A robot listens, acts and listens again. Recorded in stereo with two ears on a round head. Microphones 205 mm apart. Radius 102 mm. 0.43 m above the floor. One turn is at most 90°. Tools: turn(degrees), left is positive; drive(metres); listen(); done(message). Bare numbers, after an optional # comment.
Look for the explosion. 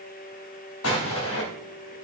# The explosion: about 65° left or 115° left.
turn(65)
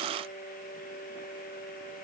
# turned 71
listen()
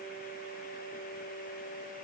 done("I heard an explosion, but can't make it out now. It was about 5° right or 45° left.")